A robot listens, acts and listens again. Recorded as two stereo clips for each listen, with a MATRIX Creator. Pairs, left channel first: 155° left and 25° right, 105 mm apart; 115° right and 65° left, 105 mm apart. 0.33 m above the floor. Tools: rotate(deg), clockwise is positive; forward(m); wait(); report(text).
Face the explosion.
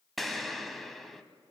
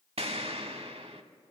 rotate(-70)
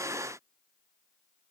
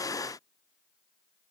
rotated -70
report("I heard an explosion from this way, but can't make it out now.")